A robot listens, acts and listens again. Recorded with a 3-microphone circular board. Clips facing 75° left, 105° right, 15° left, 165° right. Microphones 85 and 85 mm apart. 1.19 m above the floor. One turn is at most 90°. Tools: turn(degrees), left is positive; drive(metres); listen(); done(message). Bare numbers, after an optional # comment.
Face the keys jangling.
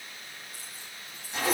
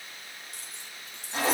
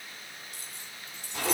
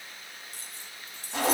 # The keys jangling: 115° right.
turn(-90)
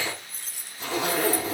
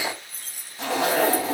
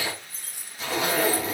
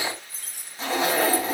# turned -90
# The keys jangling is now 65° right.
turn(-65)
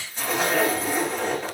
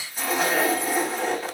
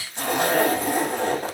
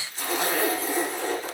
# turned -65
listen()
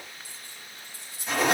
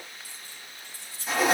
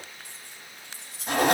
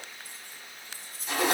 done("Found it: keys jangling, straight ahead.")